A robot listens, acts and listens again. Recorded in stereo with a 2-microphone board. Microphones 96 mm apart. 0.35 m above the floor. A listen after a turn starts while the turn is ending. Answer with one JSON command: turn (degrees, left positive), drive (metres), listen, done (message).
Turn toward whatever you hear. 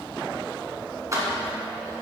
{"turn": -35}
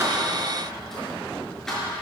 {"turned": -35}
{"done": "Facing the keys jangling, 2 to 4 m away."}